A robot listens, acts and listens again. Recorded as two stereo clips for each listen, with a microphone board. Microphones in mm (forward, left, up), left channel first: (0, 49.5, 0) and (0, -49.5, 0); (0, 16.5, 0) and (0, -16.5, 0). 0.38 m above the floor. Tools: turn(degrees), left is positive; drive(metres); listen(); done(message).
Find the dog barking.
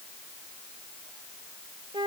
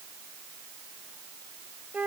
listen()
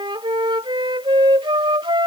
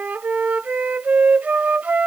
listen()
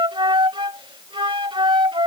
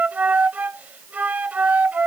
done("I can't make out a dog barking to turn to.")